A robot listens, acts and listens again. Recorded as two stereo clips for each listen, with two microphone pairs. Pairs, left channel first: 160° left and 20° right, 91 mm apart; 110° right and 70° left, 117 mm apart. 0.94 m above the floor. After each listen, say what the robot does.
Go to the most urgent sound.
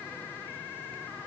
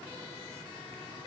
Keep listening.
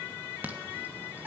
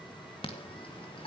Turn 85° right.
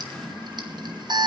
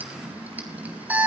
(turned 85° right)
Drive 1.0 m forward.
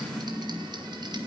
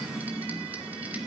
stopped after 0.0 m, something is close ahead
Blocked. The alarm is further on, straight ahead.